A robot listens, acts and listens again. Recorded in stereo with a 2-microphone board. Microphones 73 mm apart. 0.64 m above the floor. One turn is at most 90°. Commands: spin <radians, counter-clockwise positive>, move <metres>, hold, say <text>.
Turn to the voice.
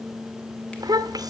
spin -1.13
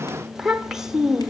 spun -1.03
say Found it: a child speaking, straight ahead.